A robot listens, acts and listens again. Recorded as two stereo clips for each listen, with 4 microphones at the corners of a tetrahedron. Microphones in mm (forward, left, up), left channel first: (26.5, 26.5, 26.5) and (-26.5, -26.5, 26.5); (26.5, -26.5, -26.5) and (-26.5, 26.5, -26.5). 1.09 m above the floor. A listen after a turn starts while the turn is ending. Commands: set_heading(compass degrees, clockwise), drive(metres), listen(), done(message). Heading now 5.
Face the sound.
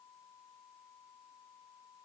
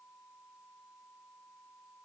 listen()
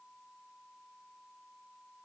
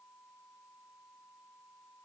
listen()
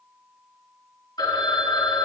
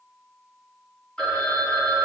set_heading(330)
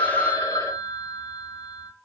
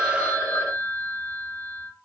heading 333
done("Facing the phone ringing.")